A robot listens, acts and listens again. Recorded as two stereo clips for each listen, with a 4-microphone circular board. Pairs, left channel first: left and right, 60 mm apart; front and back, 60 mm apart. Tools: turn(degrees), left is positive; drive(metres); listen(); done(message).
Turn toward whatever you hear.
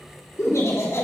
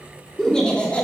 turn(degrees=65)
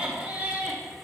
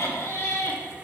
turn(degrees=-45)
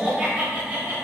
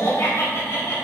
turn(degrees=-30)
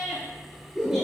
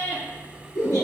turn(degrees=-10)
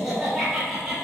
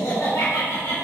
turn(degrees=-10)
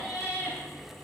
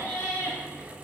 done("Found it: laughter, straight ahead.")